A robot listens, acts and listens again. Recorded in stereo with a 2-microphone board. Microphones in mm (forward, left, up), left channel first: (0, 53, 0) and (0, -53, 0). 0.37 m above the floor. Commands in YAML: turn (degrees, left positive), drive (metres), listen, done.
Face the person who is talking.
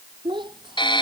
turn: -45
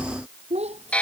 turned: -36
turn: -95
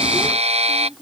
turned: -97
done: "Facing the child speaking."